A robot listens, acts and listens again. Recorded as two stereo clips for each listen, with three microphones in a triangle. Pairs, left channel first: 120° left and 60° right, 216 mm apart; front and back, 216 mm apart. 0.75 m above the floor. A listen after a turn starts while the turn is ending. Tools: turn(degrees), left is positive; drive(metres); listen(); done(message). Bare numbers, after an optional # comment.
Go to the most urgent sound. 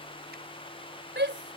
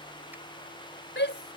# The shout: 30° right.
turn(-30)
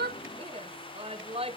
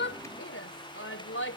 drive(1.0)
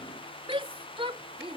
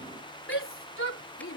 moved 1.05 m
drive(1.0)
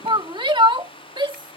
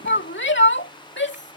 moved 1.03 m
drive(1.0)
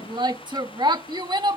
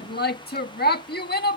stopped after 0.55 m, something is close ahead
done("I am next to the shout.")